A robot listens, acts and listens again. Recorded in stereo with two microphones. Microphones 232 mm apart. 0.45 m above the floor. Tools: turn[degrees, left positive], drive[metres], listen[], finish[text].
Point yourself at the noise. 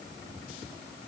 Action: listen[]
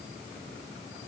Action: listen[]
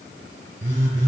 Thought: The phone buzzing: about 60° right or 120° right.
Action: turn[-60]
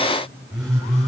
Action: finish[Facing the phone buzzing, over 4 m away.]